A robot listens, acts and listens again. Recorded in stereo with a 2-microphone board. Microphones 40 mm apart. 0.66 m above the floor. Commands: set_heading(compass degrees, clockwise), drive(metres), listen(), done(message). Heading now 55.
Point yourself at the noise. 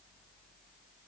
listen()
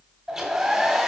set_heading(85)
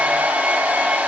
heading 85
set_heading(220)
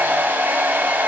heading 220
set_heading(270)
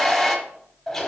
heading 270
set_heading(255)
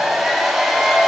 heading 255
done("Found it: a hair dryer, straight ahead, 1 to 2 m away.")